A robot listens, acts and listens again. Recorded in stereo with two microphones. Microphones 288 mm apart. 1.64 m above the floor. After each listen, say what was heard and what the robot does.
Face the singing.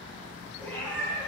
Keep listening.
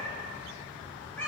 Keep listening.
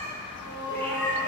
Turn 90° left.
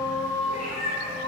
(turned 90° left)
So it is at 10° left. Turn 10° left.
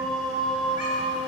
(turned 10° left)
Found it: singing, straight ahead, under 1 m away.